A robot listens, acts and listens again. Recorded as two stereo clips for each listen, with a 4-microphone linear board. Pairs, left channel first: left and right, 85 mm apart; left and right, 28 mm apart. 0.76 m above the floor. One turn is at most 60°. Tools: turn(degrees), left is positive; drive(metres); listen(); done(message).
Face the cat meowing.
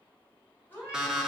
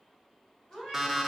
turn(degrees=25)
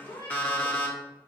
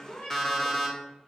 turn(degrees=60)
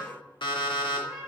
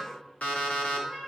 turn(degrees=60)
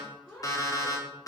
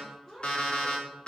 done("Facing the cat meowing.")